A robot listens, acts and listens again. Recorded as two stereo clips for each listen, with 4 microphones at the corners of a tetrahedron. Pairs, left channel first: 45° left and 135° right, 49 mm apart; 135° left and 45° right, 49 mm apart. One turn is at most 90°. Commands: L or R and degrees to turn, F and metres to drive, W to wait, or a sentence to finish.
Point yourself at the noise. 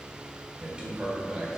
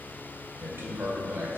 R60
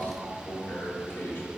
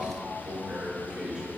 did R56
L20
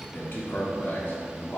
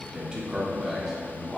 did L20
L45
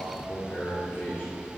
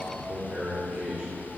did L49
L20
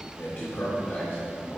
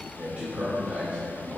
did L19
L10
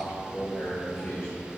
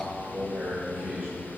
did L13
Found it: a man speaking, straight ahead.